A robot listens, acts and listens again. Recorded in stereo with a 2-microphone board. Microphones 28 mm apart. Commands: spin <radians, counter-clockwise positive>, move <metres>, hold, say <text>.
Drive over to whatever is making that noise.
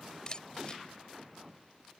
spin 0.52
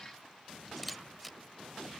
move 1.0
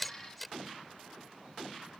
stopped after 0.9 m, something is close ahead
say Blocked. The camera shutter is further on, straight ahead.